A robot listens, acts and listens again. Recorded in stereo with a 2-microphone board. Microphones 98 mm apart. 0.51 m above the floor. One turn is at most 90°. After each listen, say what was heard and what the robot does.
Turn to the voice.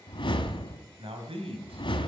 The man speaking: about 75° right or 105° right. Turn 75° right.
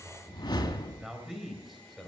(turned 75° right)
Found it: a man speaking, straight ahead, 2 to 4 m away.